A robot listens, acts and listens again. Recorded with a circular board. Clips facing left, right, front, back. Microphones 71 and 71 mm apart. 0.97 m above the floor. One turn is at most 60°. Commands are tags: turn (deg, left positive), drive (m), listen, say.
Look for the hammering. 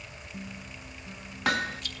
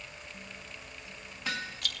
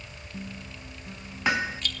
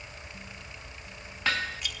<turn deg="60"/>
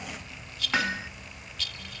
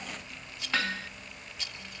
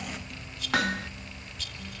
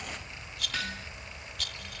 <turn deg="20"/>
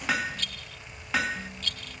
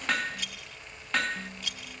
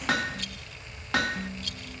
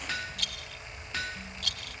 <say>Found it: hammering, straight ahead.</say>